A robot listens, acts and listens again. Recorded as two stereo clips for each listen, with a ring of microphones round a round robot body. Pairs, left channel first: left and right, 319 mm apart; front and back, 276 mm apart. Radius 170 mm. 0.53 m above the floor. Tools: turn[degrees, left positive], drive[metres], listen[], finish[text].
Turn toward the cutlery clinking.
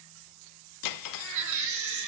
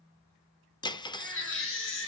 Thought: The cutlery clinking: 75° left.
Action: turn[75]
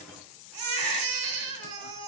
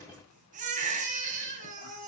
Action: listen[]
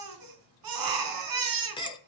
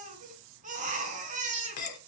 Thought: The cutlery clinking is now 15° left.
Action: turn[15]
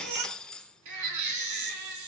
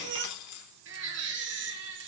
Action: finish[Found it: cutlery clinking, straight ahead.]